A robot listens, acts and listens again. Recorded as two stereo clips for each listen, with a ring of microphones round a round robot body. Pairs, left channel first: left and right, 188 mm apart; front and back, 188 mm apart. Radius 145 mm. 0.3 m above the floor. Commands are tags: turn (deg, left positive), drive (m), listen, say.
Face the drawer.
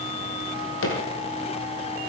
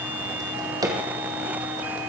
<turn deg="110"/>
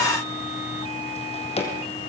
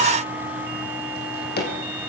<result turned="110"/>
<turn deg="35"/>
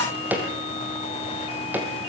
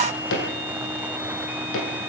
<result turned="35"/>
<turn deg="-10"/>
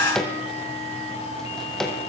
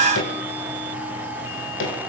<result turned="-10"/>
<say>Facing the drawer.</say>